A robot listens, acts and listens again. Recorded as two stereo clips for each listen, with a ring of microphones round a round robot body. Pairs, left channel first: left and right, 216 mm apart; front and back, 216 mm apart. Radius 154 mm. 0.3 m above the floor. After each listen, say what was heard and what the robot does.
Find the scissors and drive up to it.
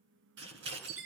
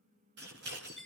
The scissors: 130° right. Turn 130° right.
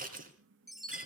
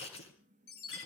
The scissors is now 45° right. Turn 45° right.
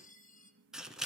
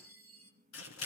Drive 1.0 m forward.
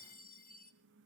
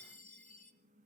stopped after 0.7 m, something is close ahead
Keep listening.
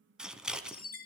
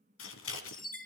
Something is in my way. I am facing the scissors but have not reached it.